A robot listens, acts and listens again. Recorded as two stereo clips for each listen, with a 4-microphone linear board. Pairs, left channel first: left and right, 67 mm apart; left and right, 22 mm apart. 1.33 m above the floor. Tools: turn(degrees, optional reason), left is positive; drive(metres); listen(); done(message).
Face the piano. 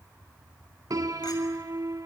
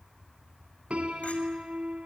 turn(degrees=-60, reason="The piano: about 60° right or 120° right.")
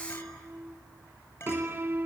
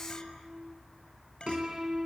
turn(degrees=-35, reason="So it is at 35° right.")
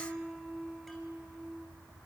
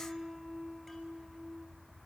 done("Facing the piano.")